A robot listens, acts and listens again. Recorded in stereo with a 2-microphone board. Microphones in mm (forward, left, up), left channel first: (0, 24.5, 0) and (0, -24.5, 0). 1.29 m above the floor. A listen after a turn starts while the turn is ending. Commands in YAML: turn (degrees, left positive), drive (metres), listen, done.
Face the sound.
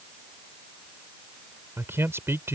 turn: -60
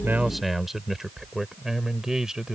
turn: -15
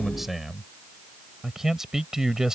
turn: -10
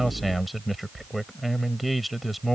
done: "Found it: a man speaking, straight ahead."